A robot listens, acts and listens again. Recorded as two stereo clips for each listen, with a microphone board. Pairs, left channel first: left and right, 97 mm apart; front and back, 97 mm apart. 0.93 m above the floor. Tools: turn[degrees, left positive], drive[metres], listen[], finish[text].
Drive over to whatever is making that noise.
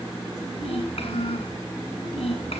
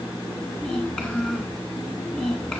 Thought: The child speaking: 75° left.
Action: turn[75]
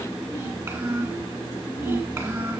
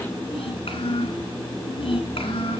Thought: The child speaking is now 30° right.
Action: turn[-30]
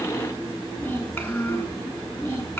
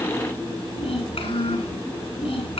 Thought: The child speaking is now 15° left.
Action: turn[15]
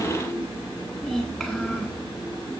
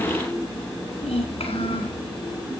Action: drive[1.0]
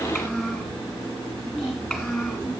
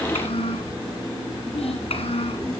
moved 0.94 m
Action: drive[1.0]
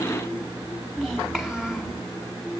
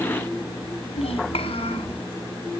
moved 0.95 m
Action: drive[1.0]
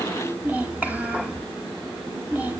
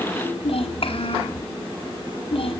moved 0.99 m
Thought: The child speaking is now 15° right.
Action: turn[-15]
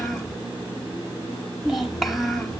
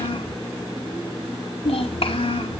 Action: drive[1.0]
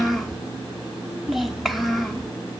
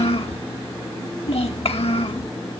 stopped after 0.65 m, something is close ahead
Action: finish[Arrived at the child speaking, straight ahead.]